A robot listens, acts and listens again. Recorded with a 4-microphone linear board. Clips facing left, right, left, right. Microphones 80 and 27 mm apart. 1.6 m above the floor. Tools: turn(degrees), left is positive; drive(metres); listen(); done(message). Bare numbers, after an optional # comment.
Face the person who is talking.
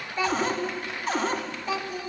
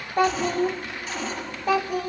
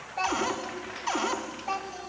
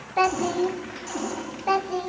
# The child speaking: about 55° right or 125° right.
turn(-55)
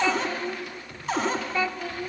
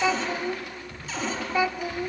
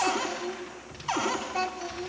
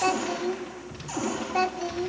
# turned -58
# So it is at 15° right.
turn(-15)
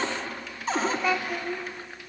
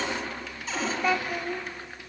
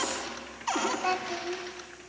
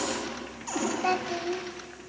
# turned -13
done("Found it: a child speaking, straight ahead, 1 to 2 m away.")